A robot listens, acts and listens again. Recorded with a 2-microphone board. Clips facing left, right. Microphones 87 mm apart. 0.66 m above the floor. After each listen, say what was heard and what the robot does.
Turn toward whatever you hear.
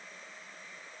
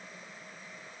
Keep listening.
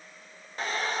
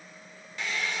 The hair dryer: about 40° left or 140° left. Turn 40° left.
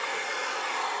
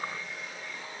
So it is at 100° left. Turn 100° left.
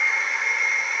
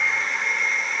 Facing the hair dryer, under 1 m away.